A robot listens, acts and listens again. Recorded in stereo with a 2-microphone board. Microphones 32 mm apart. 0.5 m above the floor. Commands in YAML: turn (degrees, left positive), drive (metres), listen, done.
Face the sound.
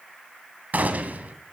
turn: -55
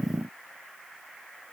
listen: true
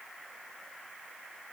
done: "I heard a gunshot, but can't make it out now. It was about straight ahead or 70° right."